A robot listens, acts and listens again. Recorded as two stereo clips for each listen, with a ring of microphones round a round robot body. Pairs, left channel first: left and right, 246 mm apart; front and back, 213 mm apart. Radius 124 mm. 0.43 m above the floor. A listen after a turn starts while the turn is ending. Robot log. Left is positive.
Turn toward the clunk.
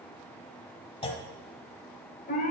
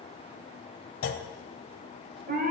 note: The clunk: 20° left.
cmd yaw +20
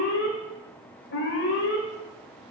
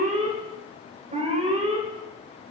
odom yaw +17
end: I heard a clunk from this way, but can't make it out now.